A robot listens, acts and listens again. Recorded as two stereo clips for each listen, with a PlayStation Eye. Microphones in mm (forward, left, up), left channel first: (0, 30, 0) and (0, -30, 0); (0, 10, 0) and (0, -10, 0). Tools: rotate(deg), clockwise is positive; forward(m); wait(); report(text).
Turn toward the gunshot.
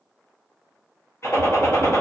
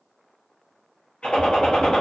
rotate(-60)
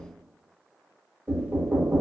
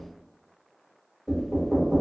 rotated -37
wait()
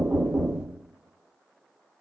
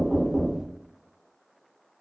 report("I heard a gunshot, but can't make it out now. It was about 25° left or 85° left.")